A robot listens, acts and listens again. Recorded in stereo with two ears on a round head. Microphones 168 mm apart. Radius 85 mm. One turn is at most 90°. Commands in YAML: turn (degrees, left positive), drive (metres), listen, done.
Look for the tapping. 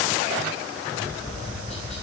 turn: 40
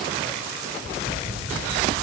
turn: 90
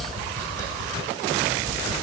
turn: 15
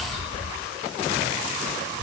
turn: 10
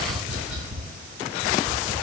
done: "Found it: tapping, straight ahead."